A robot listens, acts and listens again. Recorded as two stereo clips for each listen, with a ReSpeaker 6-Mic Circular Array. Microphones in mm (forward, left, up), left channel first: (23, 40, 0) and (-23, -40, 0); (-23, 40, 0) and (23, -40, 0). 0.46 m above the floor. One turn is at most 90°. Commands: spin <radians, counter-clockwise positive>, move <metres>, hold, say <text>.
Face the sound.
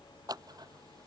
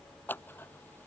spin -1.57
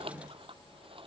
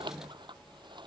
spin -1.57
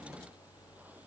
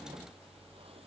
spin -0.17
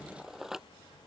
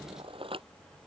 spin -0.61
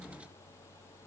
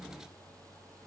hold
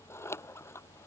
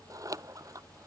say Facing the scissors.